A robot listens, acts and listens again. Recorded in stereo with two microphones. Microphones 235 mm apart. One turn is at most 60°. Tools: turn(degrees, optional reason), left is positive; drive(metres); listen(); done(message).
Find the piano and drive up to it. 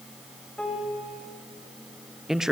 turn(degrees=30)
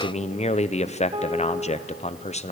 turn(degrees=-25, reason="So it is at 25° right.")
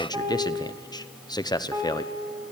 turn(degrees=-15, reason="The piano is now 15° right.")
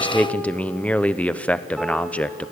listen()
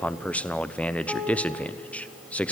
drive(metres=1.0)
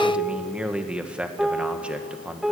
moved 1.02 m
drive(metres=1.0)
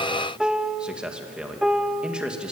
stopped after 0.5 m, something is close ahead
done("Arrived at the piano, straight ahead.")